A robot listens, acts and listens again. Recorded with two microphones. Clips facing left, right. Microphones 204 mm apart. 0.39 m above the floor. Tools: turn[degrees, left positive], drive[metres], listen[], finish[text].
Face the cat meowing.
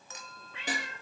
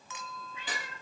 Action: turn[90]
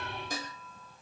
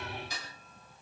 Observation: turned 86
Action: listen[]
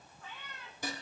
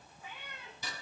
Thought: The cat meowing is now 15° right.
Action: turn[-15]
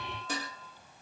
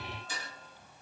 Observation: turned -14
Action: listen[]
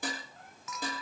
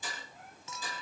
Action: listen[]
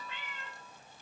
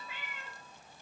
Thought: The cat meowing is now 10° right.
Action: turn[-10]
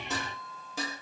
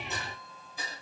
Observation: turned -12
Action: listen[]
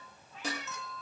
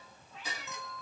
Action: finish[Found it: a cat meowing, straight ahead, over 4 m away.]